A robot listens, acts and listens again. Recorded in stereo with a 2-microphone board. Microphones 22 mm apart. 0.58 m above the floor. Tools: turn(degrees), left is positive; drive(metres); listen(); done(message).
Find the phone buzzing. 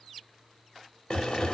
turn(degrees=20)
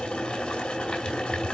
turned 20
listen()
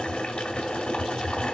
done("Found it: a phone buzzing, straight ahead, 1 to 2 m away.")